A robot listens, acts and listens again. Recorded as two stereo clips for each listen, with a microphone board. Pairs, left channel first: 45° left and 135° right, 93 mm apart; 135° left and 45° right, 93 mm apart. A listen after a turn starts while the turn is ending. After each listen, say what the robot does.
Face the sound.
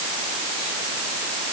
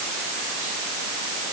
Keep listening.
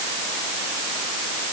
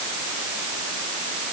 Keep listening.
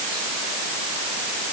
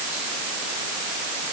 I can't make out anything to turn to.